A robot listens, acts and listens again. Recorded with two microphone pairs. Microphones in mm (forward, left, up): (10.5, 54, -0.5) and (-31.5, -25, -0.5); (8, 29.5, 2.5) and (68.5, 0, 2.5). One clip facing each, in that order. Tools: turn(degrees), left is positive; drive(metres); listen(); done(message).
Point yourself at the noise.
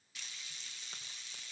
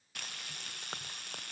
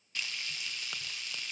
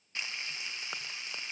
turn(degrees=-90)
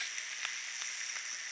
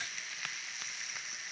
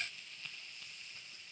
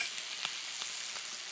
turn(degrees=-30)
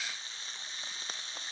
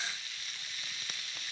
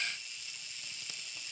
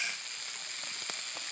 done("Facing the frying.")